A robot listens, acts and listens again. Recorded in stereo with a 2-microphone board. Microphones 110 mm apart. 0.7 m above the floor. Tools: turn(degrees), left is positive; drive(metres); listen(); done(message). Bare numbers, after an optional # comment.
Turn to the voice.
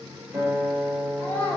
# The child speaking: about 20° left or 160° left.
turn(20)
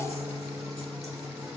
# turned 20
listen()
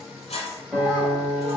listen()
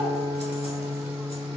done("I heard a child speaking, but can't make it out now. It was about straight ahead or 140° left.")